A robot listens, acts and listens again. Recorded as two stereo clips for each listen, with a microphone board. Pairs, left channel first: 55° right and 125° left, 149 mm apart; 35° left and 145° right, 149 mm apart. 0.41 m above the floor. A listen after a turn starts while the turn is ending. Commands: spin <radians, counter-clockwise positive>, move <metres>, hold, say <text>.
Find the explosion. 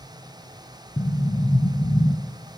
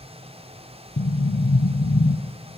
say Found it: an explosion, straight ahead.